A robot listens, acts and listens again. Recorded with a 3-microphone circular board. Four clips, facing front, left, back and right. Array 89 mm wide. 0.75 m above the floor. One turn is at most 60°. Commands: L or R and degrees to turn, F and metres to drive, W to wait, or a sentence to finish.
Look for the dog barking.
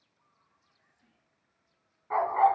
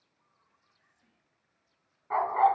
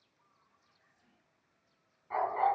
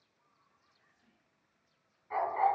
L50
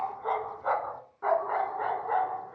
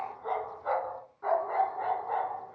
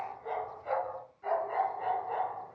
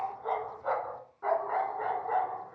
R20
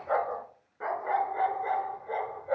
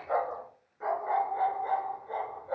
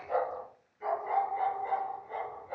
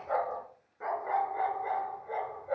R10
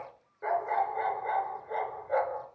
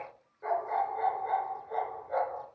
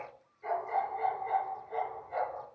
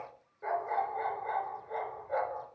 Facing the dog barking.